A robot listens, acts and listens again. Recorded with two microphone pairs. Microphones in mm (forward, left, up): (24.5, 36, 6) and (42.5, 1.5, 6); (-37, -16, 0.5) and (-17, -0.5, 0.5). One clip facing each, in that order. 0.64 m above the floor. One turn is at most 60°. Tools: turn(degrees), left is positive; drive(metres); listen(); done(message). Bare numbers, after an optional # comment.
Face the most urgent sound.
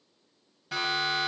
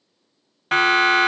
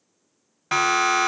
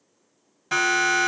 # The siren: 85° right.
turn(-60)
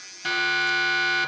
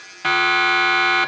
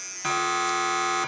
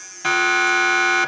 # The siren is now 40° right.
turn(-40)
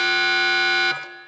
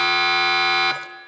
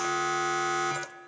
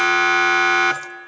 done("Facing the siren, over 4 m away.")